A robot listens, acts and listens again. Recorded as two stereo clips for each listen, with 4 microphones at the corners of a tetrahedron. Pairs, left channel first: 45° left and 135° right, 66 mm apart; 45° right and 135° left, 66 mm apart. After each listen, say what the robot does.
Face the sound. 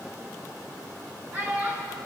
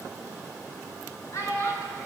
Turn 85° right.
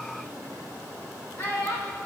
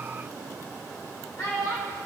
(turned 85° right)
Turn 20° right.
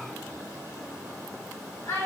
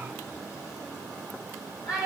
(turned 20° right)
Turn 10° right.
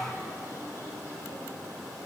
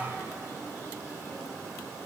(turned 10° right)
Keep listening.
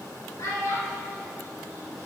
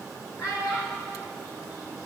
Facing the child speaking, over 4 m away.